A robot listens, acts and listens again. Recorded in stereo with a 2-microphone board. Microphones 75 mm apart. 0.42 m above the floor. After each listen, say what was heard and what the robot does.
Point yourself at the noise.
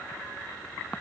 Keep listening.
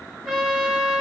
Turn 30° right.
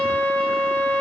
So it is at 20° left. Turn 20° left.
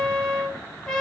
Found it: a trumpet, straight ahead.